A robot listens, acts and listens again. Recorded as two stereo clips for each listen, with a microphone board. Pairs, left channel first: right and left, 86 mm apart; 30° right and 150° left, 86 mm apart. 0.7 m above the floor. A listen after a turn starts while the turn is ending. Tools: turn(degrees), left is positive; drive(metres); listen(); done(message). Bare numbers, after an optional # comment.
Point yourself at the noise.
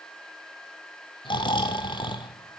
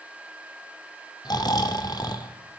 # The snoring: 65° right.
turn(-65)
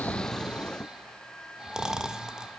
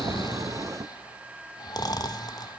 # The snoring is now 10° left.
turn(10)
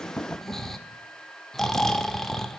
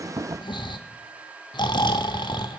done("Found it: snoring, straight ahead.")